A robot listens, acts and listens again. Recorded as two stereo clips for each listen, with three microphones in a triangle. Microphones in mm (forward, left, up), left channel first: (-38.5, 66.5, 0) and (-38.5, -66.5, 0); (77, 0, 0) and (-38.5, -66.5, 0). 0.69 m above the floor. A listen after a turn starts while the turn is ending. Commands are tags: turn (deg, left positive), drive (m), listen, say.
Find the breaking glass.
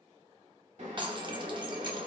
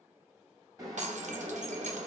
<turn deg="-140"/>
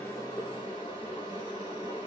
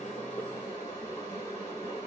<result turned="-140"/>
<say>Facing where the breaking glass came from. I can't hear it now.</say>